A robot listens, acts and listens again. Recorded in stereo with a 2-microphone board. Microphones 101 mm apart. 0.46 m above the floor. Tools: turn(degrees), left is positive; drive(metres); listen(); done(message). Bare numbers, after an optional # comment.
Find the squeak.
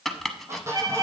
# The squeak: about 30° right or 150° right.
turn(-30)
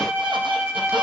listen()
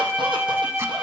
listen()
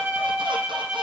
done("I heard a squeak, but can't make it out now. It was about straight ahead or 120° right.")